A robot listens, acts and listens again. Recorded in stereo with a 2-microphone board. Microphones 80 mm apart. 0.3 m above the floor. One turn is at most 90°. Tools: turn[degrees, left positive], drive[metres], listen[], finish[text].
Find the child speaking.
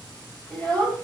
Thought: The child speaking: about 20° left or 160° left.
Action: turn[20]
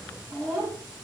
Action: turn[30]
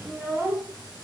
Thought: So it is at 25° right.
Action: turn[-25]
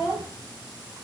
Action: finish[Facing the child speaking.]